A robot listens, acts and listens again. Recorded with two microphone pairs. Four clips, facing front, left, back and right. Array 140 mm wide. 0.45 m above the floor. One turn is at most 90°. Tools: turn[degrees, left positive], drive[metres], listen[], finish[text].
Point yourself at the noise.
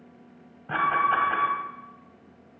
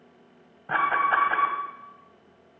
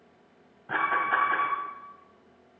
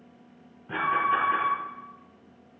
Thought: The alarm: 75° left.
Action: turn[75]
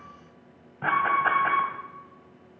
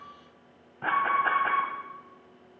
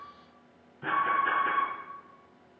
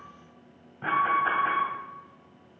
Thought: The alarm is now 20° left.
Action: turn[20]
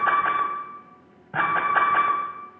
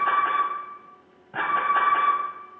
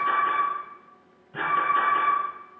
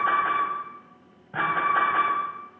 Action: finish[Facing the alarm, 1 to 2 m away.]